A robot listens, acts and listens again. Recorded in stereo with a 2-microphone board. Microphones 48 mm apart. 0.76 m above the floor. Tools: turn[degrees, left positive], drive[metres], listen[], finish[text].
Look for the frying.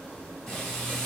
Action: turn[30]
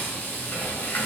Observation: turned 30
Thought: So it is at 140° left.
Action: turn[140]
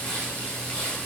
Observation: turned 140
Thought: The frying is now 25° left.
Action: turn[25]
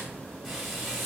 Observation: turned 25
Action: finish[Found it: frying, straight ahead, 1 to 2 m away.]